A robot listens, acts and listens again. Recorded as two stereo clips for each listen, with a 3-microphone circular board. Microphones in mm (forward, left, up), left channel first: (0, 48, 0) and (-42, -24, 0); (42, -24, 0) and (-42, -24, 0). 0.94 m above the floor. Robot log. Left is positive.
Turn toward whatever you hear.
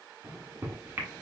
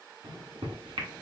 note: The microwave: 175° left.
cmd yaw +175
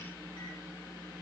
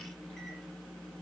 note: The microwave is now 80° left.
cmd yaw +80
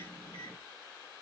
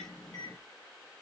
note: The microwave is now 35° left.
cmd yaw +35
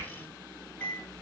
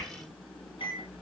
end: Facing the microwave, 1 to 2 m away.